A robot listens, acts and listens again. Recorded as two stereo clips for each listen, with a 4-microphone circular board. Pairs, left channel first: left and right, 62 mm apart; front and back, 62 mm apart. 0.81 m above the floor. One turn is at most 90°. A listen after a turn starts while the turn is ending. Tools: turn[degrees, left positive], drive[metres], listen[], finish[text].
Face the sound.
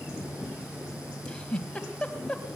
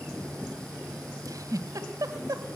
Thought: The giggle: 165° left.
Action: turn[90]
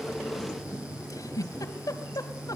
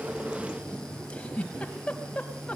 Thought: The giggle is now 75° left.
Action: turn[75]
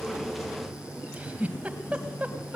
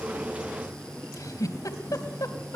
Thought: The giggle is now 20° right.
Action: turn[-20]
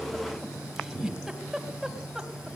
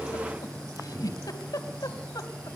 Action: finish[Found it: a giggle, straight ahead, 2 to 4 m away.]